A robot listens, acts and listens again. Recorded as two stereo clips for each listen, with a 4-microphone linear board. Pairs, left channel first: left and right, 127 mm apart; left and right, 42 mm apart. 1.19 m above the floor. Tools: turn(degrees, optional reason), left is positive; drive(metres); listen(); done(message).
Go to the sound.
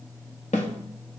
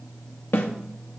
turn(degrees=65, reason="The snare drum: about 65° left or 115° left.")
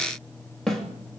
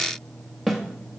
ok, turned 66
drive(metres=1.0)
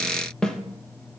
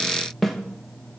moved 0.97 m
drive(metres=1.0)
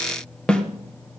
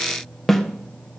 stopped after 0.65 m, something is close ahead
turn(degrees=10, reason="The snare drum is now 10° left.")
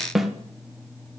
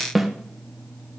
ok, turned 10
done("Arrived at the snare drum, straight ahead.")